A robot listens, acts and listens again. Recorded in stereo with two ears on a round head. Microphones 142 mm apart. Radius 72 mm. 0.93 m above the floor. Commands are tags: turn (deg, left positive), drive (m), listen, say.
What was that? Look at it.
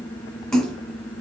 <turn deg="30"/>
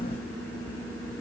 <listen/>
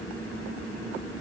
<say>I heard a splash, but can't make it out now. It was about 25° right or 145° left.</say>